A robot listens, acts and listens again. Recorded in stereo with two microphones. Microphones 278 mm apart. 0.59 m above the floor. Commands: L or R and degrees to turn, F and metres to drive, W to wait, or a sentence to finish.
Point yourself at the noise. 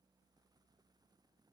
W
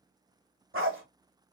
R50
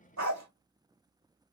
R80
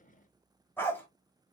L10
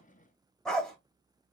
Found it: a dog barking, straight ahead.